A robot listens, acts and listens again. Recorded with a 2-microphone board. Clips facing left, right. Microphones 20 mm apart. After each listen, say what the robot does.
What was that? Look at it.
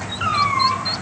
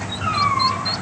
Turn 45° left.
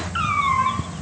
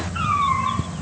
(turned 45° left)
Turn 80° left.
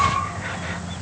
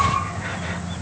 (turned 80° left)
Keep listening.
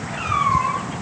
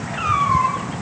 Facing the cat meowing.